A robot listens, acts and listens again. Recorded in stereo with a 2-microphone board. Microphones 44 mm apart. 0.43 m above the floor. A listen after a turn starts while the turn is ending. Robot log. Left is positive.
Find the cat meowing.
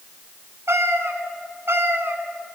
note: The cat meowing: about 75° right or 105° right.
cmd yaw -75
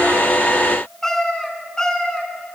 note: So it is at 20° left.
cmd yaw +20
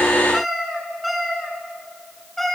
end: Found it: a cat meowing, straight ahead, 2 to 4 m away.